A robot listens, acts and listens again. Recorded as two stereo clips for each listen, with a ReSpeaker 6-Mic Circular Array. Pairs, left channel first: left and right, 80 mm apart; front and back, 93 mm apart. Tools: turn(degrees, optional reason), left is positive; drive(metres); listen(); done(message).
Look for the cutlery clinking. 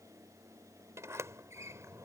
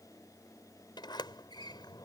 listen()
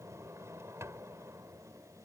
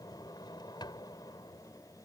listen()
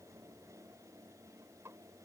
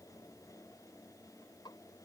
done("I can't make out cutlery clinking, only a sliding door.")